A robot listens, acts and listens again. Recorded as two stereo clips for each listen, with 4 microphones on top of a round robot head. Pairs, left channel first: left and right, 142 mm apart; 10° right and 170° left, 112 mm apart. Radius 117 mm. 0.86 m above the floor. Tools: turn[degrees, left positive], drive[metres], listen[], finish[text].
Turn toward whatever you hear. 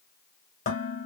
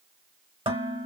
Thought: The dishes clattering: 125° left.
Action: turn[125]
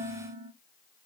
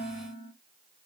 Thought: The dishes clattering is now 20° right.
Action: turn[-20]
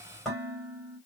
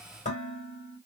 Action: finish[Facing the dishes clattering.]